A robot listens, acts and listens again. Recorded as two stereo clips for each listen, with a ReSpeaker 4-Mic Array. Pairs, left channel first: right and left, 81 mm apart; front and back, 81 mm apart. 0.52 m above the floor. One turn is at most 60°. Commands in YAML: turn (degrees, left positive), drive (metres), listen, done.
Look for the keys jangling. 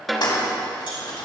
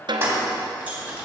turn: -60
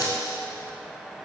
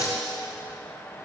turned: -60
turn: -60
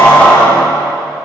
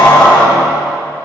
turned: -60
turn: -15
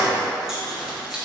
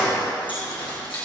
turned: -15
listen: true
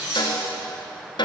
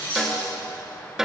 turn: 10
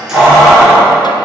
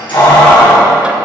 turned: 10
done: "Facing the keys jangling, over 4 m away."